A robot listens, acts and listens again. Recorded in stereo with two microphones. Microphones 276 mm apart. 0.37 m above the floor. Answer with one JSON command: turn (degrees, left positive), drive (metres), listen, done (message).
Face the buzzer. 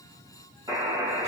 {"turn": -30}
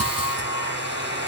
{"turn": -135}
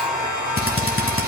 {"listen": true}
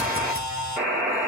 {"done": "Found it: a buzzer, straight ahead, 1 to 2 m away."}